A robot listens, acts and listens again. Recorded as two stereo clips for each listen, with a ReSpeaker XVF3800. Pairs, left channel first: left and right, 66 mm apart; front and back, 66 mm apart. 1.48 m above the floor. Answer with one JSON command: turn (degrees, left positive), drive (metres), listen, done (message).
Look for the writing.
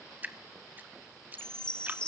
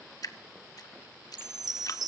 {"listen": true}
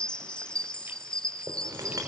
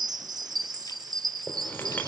{"turn": -60}
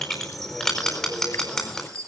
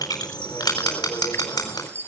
{"turn": 10}
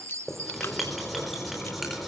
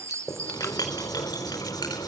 {"done": "Found it: writing, straight ahead, over 4 m away."}